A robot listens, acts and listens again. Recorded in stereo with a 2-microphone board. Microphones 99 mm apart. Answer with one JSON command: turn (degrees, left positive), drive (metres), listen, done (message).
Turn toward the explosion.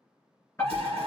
{"turn": -90}
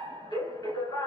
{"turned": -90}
{"done": "Facing where the explosion came from. I can't hear it now."}